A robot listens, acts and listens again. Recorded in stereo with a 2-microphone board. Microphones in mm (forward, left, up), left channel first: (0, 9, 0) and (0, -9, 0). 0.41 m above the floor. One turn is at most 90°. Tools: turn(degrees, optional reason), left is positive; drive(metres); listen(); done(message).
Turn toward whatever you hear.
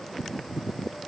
listen()
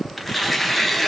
turn(degrees=-30)
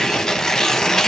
turn(degrees=25, reason="So it is at 25° left.")
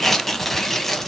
done("Found it: tearing paper, straight ahead, under 1 m away.")